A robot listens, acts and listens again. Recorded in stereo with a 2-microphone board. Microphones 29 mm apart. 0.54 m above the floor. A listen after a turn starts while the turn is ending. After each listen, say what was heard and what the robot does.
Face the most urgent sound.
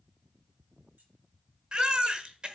The baby crying: about 25° right or 155° right. Turn 25° right.
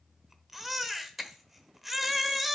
Found it: a baby crying, straight ahead.